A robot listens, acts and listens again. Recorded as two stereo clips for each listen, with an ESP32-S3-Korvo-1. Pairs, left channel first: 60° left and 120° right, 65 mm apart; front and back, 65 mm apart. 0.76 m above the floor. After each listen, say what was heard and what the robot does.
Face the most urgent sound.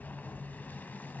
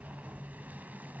Keep listening.
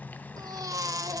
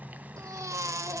The baby crying: 145° right. Turn 145° right.
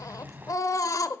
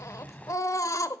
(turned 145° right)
The baby crying is now 35° left. Turn 35° left.
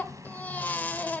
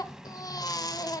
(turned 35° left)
Found it: a baby crying, straight ahead, 1 to 2 m away.